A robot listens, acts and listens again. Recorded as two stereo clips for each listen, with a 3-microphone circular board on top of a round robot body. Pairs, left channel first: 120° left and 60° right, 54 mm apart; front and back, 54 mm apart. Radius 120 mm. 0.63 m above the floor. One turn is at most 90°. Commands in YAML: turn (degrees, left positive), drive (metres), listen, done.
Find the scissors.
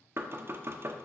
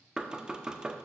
listen: true
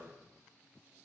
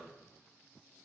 listen: true
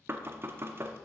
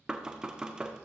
done: "I can't make out scissors to turn to."